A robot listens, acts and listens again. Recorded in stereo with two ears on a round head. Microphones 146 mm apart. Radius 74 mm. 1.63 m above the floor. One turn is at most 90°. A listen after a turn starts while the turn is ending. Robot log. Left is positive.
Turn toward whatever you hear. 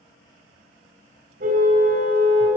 note: The car horn: about 60° right or 120° right.
cmd yaw -60
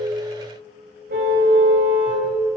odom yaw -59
note: So it is at 60° right.
cmd yaw -60
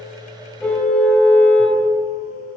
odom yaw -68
note: The car horn is now 10° left.
cmd yaw +10
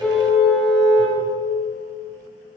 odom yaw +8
end: Facing the car horn.